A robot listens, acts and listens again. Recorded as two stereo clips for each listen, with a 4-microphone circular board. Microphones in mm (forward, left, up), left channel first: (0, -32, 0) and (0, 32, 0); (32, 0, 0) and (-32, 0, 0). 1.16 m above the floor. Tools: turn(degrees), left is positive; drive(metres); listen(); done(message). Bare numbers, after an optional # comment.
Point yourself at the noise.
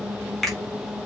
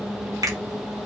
# The finger snap: 175° right.
turn(-175)
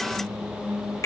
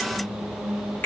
# The finger snap is now 60° right.
turn(-60)
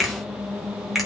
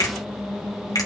done("Facing the finger snap, 2 to 4 m away.")